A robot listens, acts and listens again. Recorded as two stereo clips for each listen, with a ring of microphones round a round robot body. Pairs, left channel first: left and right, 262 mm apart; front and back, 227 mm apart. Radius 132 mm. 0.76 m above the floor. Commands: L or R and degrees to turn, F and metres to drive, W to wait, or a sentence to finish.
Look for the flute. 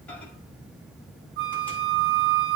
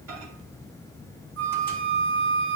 R130
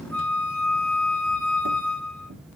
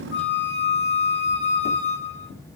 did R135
Facing the flute.